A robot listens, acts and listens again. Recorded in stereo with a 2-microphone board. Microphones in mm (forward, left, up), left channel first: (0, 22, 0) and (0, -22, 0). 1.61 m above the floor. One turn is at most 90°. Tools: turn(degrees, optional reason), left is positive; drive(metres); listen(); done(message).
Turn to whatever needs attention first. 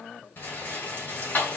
listen()
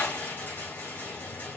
listen()
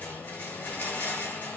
done("I can't make out anything urgent to turn to.")